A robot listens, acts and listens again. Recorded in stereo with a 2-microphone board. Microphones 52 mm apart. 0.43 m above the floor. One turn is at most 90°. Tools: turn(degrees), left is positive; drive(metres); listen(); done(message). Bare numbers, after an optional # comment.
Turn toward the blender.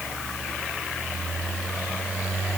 listen()
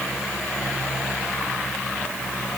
listen()
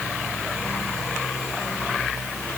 done("I can't make out a blender to turn to.")